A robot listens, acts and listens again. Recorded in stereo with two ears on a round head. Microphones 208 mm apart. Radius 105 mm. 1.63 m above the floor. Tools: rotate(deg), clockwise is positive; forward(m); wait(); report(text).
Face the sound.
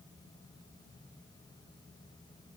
wait()
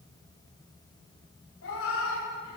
rotate(-55)
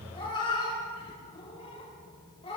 rotate(-25)
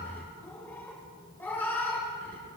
rotate(-10)
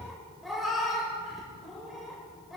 report("Facing the cat meowing, 1 to 2 m away.")